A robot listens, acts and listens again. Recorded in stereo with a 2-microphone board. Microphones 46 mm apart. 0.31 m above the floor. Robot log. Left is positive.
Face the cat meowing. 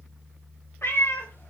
note: The cat meowing: about 70° left or 110° left.
cmd yaw +70
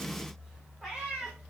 note: So it is at 10° right.
cmd yaw -10
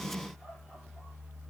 cmd idle
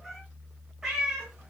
note: The cat meowing is now 15° right.
cmd yaw -15
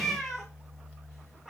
end: Found it: a cat meowing, straight ahead.